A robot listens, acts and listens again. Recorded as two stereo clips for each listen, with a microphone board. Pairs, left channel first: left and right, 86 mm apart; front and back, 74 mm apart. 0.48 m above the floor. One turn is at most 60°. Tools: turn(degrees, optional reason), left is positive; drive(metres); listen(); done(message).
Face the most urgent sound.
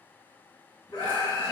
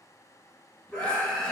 turn(degrees=60, reason="The scream: 70° left.")
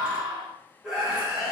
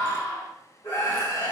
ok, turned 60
done("Found it: a scream, straight ahead, 1 to 2 m away.")